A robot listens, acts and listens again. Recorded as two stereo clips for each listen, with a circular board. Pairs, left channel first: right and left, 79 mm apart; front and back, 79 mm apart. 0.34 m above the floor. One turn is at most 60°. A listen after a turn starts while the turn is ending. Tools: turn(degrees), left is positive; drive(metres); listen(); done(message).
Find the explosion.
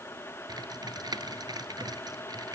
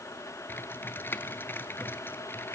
listen()
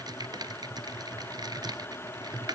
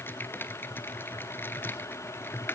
listen()
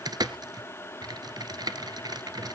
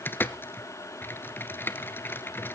done("I can't make out an explosion, only typing on a keyboard.")